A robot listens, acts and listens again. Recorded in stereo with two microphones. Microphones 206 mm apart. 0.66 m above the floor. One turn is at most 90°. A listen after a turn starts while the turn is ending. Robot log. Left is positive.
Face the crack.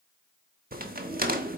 note: The crack: about 45° right or 135° right.
cmd yaw -45
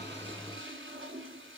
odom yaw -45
cmd idle
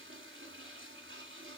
end: I heard a crack, but can't make it out now. It was about straight ahead or 90° right.